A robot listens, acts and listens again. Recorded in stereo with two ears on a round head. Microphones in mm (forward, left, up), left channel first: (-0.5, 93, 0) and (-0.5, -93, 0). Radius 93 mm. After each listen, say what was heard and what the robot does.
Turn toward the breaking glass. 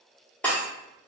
Turn 30° left.
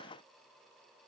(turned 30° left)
Keep listening.
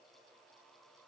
I heard breaking glass, but can't make it out now. It was about 25° right or 145° left.